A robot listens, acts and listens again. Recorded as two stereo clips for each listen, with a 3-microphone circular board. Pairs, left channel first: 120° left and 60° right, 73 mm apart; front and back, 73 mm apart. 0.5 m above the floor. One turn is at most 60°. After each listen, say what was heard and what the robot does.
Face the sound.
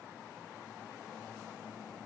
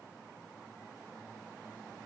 Keep listening.
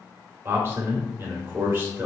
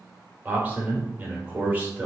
The man speaking: 115° right. Turn 60° right.
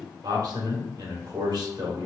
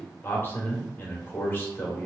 The man speaking is now 60° right. Turn 60° right.
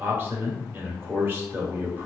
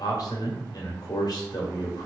Found it: a man speaking, straight ahead.